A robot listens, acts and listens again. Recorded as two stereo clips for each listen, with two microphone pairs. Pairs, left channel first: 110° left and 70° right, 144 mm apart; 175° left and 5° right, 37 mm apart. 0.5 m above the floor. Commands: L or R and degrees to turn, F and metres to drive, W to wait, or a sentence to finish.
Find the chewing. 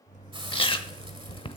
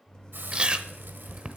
L55
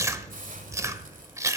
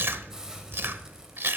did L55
Found it: chewing, straight ahead.